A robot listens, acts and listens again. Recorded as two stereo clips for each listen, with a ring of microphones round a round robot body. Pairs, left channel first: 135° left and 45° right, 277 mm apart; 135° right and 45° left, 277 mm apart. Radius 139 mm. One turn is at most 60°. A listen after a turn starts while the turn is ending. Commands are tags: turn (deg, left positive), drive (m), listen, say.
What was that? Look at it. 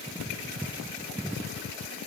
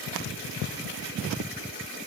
<listen/>
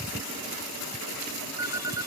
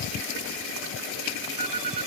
<turn deg="35"/>
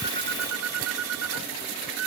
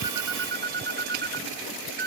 <turn deg="-10"/>
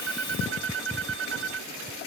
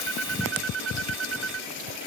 <say>Facing the phone ringing.</say>